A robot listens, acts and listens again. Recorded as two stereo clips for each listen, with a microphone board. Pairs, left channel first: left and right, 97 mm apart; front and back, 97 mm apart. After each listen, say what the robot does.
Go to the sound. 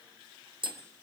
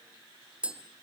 Turn 105° right.
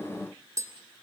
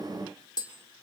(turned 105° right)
Turn 40° right.
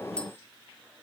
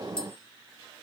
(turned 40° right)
Keep listening.
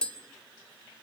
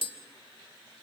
Turn 10° left.
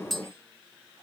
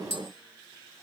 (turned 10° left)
Drive 1.0 m forward.
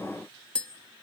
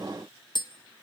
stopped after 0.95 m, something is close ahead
Turn 15° left.
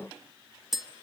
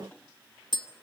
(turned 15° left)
Arrived at the tapping, straight ahead.